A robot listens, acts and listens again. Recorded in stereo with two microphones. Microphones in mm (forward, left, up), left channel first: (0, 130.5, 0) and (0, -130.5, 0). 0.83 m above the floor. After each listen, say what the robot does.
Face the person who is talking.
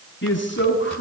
Turn 45° left.
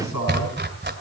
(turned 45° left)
Turn 90° left.
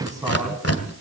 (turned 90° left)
Turn 15° right.
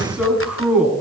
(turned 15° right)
Facing the man speaking.